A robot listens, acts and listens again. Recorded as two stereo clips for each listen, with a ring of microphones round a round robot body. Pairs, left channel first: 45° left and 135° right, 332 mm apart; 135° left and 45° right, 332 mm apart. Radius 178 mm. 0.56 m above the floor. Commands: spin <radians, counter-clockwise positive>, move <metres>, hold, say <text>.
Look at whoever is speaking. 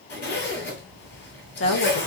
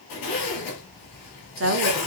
say Facing the woman speaking.